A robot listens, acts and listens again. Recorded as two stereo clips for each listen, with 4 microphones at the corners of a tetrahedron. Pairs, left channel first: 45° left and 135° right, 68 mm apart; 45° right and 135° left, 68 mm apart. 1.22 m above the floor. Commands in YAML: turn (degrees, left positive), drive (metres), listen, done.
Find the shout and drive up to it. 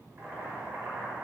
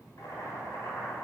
listen: true
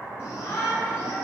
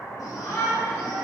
drive: 1.0
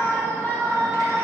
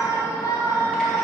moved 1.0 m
turn: -20
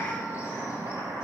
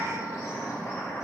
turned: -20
drive: 1.0
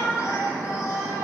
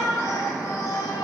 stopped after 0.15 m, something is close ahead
done: "Arrived at the shout, straight ahead."